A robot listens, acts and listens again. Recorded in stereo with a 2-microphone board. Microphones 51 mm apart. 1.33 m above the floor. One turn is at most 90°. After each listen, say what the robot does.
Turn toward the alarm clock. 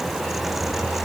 Keep listening.
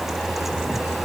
Keep listening.
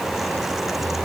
I can't make out an alarm clock to turn to.